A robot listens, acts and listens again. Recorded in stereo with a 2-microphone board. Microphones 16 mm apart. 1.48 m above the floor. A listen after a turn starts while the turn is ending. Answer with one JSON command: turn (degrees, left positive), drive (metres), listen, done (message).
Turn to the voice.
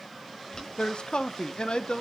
{"turn": 70}
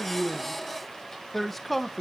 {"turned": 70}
{"done": "Found it: a man speaking, straight ahead, 1 to 2 m away."}